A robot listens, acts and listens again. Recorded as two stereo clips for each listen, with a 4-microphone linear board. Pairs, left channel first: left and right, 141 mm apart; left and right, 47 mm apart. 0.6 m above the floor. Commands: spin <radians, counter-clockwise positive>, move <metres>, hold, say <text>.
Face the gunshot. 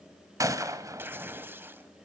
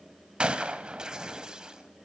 spin -0.44
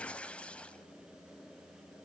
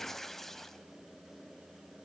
hold
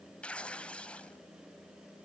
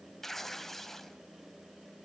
say I heard a gunshot, but can't make it out now. It was about straight ahead or 130° right.